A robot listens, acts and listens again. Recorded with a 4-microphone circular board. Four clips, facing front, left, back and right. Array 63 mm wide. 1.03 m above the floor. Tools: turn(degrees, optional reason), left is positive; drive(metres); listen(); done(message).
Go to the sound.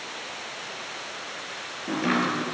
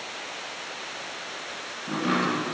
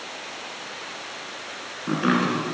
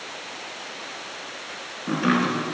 turn(degrees=-145, reason="The chopping: 145° right.")
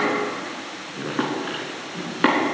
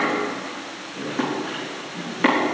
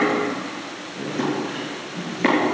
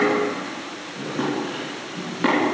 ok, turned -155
turn(degrees=10, reason="The chopping is now 10° left.")
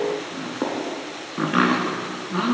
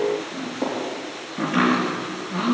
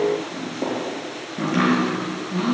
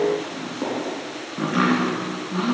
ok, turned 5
drive(metres=1.0)
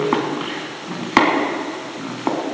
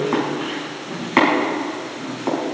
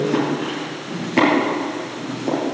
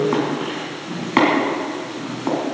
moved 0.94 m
drive(metres=1.0)
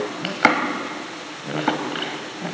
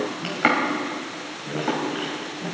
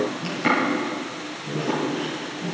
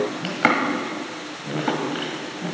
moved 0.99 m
drive(metres=1.0)
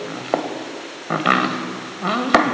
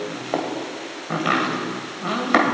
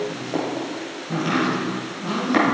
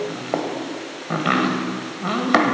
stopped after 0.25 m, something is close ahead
done("Arrived at the chopping, straight ahead.")